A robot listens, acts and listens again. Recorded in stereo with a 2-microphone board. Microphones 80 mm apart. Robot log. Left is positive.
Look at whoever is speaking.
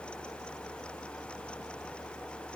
cmd idle
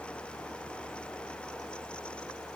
cmd idle
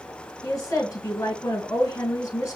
note: The woman speaking: about 40° left or 140° left.
cmd yaw +40
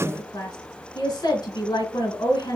note: So it is at 90° left.
cmd yaw +90
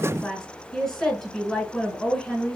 note: The woman speaking is now 15° left.
cmd yaw +15
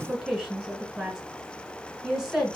end: Facing the woman speaking, 2 to 4 m away.